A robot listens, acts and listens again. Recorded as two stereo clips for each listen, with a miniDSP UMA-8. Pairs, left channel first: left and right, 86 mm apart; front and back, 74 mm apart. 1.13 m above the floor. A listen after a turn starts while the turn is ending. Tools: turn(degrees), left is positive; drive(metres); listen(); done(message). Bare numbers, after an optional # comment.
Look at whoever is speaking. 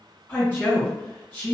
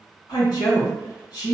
# The woman speaking: 25° left.
turn(25)
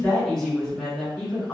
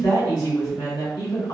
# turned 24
done("Found it: a woman speaking, straight ahead.")